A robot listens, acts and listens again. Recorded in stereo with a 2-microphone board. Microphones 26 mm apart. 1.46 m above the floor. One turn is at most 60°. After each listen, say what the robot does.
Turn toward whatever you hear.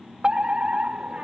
Turn 40° right.
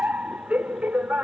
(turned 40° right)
Turn 60° right.
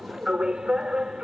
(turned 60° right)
Turn 30° right.
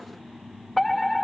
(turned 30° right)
Turn 10° left.
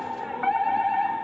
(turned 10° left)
Facing the fire alarm.